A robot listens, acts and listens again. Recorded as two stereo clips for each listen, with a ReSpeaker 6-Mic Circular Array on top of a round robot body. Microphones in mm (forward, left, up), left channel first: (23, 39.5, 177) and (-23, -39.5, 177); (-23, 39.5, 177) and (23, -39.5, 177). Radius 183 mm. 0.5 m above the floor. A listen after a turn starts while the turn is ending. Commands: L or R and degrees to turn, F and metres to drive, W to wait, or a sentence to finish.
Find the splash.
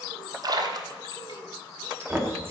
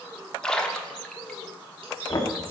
R160
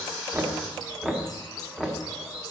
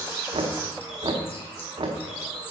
I heard a splash from this way, but can't make it out now.